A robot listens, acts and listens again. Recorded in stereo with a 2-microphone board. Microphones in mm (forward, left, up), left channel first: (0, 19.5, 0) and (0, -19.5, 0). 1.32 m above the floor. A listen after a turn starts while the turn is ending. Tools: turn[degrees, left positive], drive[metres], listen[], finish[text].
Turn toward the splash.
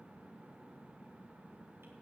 Action: listen[]
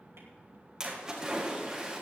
Action: turn[-30]
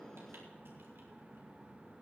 Action: listen[]
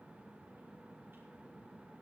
Action: finish[I heard a splash, but can't make it out now. It was about 15° left or 135° right.]